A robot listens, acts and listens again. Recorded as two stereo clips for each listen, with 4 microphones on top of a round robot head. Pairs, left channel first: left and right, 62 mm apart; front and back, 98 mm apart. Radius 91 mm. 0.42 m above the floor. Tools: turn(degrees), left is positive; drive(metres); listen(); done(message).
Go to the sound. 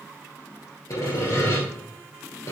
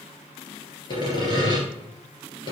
turn(degrees=45)
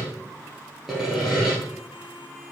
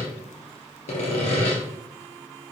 drive(metres=1.0)
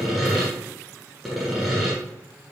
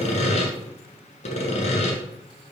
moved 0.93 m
drive(metres=1.0)
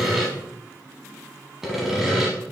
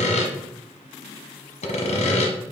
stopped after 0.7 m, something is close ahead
done("Arrived at the sawing, straight ahead.")